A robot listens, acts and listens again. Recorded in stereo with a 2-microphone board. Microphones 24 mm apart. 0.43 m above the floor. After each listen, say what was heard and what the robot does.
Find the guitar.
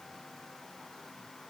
Keep listening.
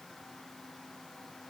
Keep listening.
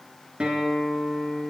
The guitar: about 60° right or 120° right. Turn 60° right.
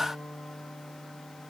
So it is at 60° right. Turn 60° right.
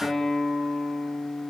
Facing the guitar.